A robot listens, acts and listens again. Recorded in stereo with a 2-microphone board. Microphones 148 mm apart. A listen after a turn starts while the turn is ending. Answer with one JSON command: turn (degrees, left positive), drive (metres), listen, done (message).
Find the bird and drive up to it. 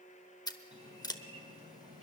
{"turn": -45}
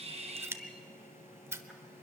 {"drive": 1.0}
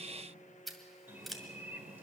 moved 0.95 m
{"turn": -15}
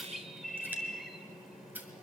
{"drive": 1.0}
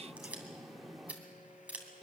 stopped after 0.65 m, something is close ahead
{"done": "I am next to the bird."}